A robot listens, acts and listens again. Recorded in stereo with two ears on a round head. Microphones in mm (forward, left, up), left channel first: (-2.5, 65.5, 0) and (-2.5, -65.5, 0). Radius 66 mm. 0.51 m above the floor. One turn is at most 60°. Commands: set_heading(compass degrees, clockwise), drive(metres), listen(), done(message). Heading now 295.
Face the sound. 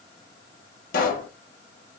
set_heading(235)
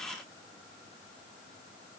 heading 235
listen()
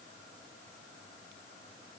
done("I heard a pop, but can't make it out now. It was about 5° left or 55° left.")